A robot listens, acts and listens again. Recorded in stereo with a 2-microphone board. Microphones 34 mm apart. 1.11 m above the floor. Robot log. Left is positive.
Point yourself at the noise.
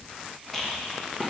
cmd yaw +30
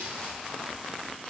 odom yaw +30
cmd idle
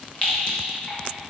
note: So it is at 140° left.
cmd yaw +140
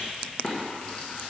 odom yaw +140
note: The rattle is now 30° left.
cmd yaw +30
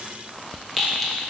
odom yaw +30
end: Found it: a rattle, straight ahead.